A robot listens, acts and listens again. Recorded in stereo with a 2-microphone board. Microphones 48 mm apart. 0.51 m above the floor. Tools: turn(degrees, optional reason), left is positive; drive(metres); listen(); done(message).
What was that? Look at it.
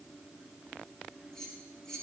turn(degrees=30)
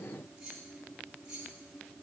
turn(degrees=-15, reason="So it is at 15° right.")
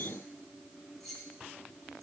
done("Found it: keys jangling, straight ahead.")